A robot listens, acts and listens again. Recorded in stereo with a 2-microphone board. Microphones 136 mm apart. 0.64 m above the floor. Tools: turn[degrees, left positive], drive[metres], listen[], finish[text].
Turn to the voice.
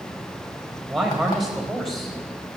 Action: turn[30]
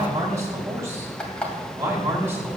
Thought: So it is at 20° right.
Action: turn[-20]
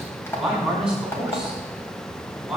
Action: finish[Facing the man speaking.]